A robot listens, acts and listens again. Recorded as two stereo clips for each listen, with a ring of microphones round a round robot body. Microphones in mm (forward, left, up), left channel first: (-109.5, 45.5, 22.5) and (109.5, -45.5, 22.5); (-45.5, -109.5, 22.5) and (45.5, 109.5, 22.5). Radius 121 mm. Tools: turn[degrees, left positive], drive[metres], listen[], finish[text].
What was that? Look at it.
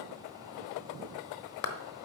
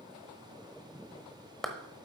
Thought: The clap: 160° left.
Action: turn[160]
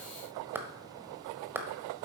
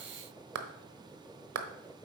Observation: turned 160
Thought: The clap is now 60° left.
Action: turn[60]
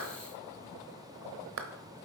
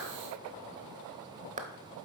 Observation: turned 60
Thought: The clap is now 10° left.
Action: turn[10]
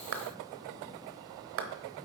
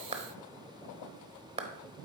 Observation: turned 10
Action: finish[Facing the clap, 1 to 2 m away.]